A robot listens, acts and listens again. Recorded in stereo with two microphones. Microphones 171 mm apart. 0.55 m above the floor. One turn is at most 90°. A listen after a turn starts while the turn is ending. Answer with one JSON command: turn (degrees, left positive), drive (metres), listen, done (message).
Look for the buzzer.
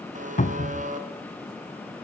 {"turn": -50}
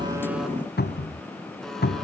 {"listen": true}
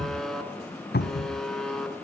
{"done": "Found it: a buzzer, straight ahead, 2 to 4 m away."}